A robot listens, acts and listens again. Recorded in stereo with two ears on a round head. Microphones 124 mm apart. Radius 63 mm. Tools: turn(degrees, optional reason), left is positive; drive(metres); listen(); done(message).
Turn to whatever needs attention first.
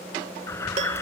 turn(degrees=20, reason="The alarm: about 20° left or 160° left.")
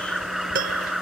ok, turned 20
done("Facing the alarm.")